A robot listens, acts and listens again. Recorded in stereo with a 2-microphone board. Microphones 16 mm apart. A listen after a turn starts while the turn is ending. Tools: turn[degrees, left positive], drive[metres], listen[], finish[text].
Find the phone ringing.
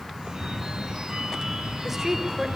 Thought: The phone ringing: about 75° right or 105° right.
Action: turn[-75]
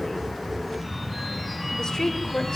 Action: finish[Facing the phone ringing.]